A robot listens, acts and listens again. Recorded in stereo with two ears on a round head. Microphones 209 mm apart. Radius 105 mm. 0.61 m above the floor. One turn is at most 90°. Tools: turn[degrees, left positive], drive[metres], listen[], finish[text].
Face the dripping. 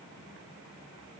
Action: listen[]
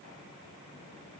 Action: listen[]
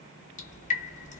Thought: The dripping: about 35° left or 145° left.
Action: turn[35]
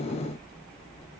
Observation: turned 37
Action: finish[Found it: dripping, straight ahead.]